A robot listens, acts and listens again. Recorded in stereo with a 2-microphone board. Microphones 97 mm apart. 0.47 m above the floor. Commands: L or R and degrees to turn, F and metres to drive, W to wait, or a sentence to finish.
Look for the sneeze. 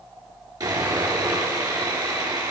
W
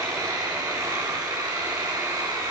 W
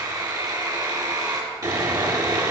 I can't make out a sneeze, only sawing.